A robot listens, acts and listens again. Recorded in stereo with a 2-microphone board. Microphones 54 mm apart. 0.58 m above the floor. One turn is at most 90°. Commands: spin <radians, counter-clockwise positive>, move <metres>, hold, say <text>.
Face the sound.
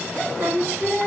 spin -1.57
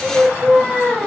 say Found it: singing, straight ahead, 1 to 2 m away.